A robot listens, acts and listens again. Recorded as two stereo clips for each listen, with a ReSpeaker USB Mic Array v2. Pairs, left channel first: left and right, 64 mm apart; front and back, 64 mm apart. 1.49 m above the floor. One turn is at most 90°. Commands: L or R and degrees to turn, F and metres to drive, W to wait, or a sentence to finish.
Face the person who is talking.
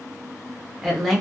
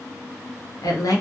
Found it: a woman speaking, straight ahead.